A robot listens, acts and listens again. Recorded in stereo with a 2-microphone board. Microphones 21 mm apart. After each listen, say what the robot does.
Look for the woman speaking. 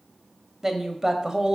Turn 35° right.
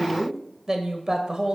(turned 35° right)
Turn 40° right.
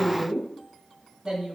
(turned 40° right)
Turn 45° right.
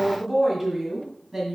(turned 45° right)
Turn 20° right.
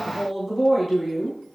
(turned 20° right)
Turn 10° right.
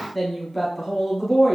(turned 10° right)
Facing the woman speaking.